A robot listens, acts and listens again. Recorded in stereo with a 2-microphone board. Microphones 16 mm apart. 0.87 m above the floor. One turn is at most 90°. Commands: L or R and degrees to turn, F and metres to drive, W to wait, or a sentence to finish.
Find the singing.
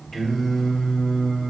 L45
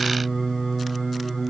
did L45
L15
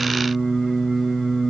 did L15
L10
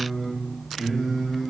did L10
L10
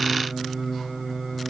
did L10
Found it: singing, straight ahead.